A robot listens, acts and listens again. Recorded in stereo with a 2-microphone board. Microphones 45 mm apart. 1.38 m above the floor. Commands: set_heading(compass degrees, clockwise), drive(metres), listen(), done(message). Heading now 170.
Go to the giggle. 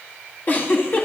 set_heading(125)
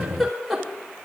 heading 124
drive(1.0)
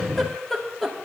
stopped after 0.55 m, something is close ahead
done("Blocked. The giggle is further on, straight ahead.")